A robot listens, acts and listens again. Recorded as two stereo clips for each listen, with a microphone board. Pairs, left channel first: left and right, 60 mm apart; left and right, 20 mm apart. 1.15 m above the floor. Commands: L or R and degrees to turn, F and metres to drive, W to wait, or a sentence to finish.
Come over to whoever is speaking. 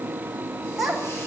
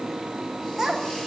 R30
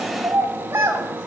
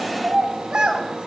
R145
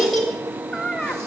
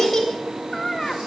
F1.0
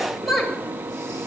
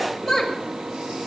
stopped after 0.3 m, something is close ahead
Blocked. The child speaking is further on, straight ahead.